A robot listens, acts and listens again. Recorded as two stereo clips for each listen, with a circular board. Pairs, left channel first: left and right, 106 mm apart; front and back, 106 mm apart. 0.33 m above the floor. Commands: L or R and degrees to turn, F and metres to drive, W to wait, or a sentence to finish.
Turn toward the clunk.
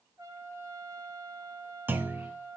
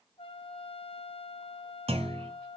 R160
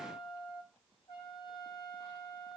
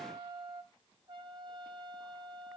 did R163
Facing where the clunk came from. I can't hear it now.